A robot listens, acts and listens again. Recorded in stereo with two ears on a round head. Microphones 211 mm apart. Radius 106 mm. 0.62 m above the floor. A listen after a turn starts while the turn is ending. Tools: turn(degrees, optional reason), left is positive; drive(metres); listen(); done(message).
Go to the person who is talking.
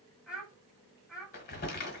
turn(degrees=-30)
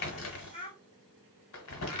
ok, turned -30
turn(degrees=25, reason="So it is at 25° left.")
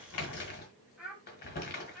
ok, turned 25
drive(metres=1.0)
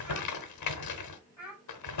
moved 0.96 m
drive(metres=1.0)
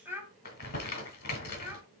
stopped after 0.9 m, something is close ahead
turn(degrees=-10, reason="The child speaking is now 10° right.")
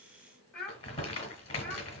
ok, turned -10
done("I am next to the child speaking.")